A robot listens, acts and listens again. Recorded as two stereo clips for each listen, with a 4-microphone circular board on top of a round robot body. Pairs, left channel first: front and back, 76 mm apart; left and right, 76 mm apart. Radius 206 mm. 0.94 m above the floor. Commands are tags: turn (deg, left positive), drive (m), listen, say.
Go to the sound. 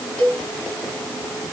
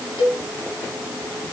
<turn deg="75"/>
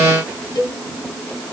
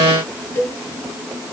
<turn deg="25"/>
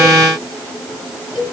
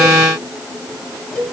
<drive m="1.0"/>
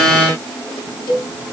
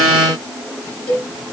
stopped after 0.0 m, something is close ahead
<turn deg="15"/>
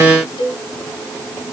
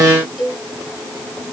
<say>Blocked. The cowbell is further on, straight ahead.</say>